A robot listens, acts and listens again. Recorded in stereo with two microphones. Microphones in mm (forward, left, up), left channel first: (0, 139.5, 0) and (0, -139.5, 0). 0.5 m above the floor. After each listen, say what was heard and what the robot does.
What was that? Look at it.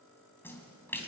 Turn 30° left.
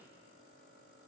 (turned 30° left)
Keep listening.
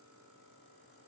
I heard a splash, but can't make it out now. It was about 25° right or 145° left.